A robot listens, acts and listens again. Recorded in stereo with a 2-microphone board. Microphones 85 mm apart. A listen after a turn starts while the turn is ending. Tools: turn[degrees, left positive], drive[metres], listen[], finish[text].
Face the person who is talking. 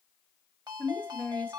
Thought: The woman speaking: about 15° left or 165° left.
Action: turn[15]
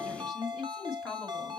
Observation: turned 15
Action: finish[Facing the woman speaking.]